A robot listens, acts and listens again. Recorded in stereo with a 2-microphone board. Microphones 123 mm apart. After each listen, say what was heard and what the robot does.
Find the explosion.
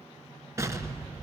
The explosion: about 25° right or 155° right. Turn 25° right.
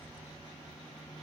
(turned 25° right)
Keep listening.
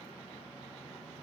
I heard an explosion, but can't make it out now. It was about straight ahead or 130° right.